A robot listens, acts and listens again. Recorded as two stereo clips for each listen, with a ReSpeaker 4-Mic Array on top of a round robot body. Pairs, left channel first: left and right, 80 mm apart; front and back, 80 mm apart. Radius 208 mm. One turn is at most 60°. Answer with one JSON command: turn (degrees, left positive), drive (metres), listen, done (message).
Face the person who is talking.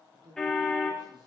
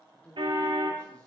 {"turn": -60}
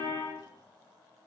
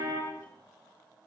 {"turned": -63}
{"turn": -15}
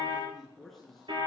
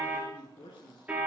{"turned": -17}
{"done": "Facing the man speaking, over 4 m away."}